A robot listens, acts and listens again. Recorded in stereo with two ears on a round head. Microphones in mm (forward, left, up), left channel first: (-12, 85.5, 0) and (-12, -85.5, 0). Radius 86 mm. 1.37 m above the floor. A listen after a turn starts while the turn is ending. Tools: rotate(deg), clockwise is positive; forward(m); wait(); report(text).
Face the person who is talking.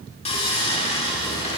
wait()
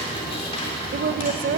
rotate(45)
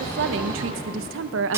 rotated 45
rotate(85)
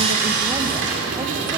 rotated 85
wait()
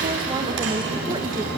wait()
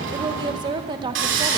rotate(25)
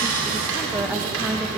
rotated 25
wait()
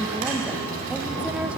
wait()
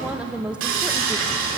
report("Found it: a woman speaking, straight ahead, under 1 m away.")